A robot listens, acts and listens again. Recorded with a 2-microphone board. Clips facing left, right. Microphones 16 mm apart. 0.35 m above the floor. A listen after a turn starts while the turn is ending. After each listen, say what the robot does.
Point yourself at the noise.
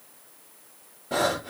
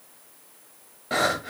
Turn 55° right.
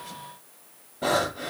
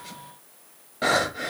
Turn 75° right.
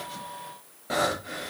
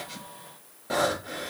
Turn 10° left.
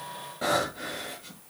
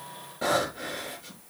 Facing the breathing.